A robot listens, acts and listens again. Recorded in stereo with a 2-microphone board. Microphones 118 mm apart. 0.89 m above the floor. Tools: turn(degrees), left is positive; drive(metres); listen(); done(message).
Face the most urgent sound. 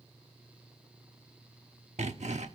listen()
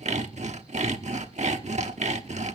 listen()
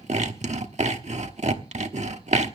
done("I can't make out anything urgent to turn to.")